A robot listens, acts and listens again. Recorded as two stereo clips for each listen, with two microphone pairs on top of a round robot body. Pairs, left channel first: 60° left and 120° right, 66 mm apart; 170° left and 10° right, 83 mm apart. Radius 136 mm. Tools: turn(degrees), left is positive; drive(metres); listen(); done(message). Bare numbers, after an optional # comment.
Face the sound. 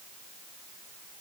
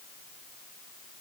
listen()
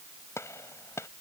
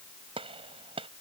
done("Facing the gunshot.")